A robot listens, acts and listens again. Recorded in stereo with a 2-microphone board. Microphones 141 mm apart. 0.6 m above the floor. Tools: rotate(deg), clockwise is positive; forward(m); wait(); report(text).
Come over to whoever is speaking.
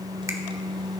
wait()
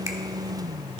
wait()
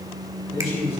rotate(-45)
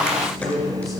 forward(1.0)
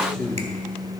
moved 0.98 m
forward(1.0)
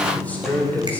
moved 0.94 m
rotate(-15)
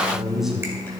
forward(1.0)
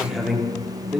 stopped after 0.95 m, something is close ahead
report("I am next to the man speaking.")